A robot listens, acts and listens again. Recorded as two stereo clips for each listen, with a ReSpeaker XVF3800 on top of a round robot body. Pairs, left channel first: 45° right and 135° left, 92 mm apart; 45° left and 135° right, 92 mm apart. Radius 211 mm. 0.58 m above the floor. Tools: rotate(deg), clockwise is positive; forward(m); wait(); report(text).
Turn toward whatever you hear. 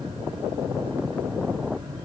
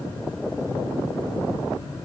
wait()
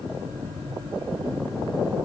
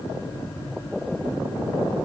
wait()
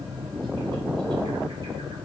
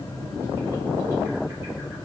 report("I can't make out anything to turn to.")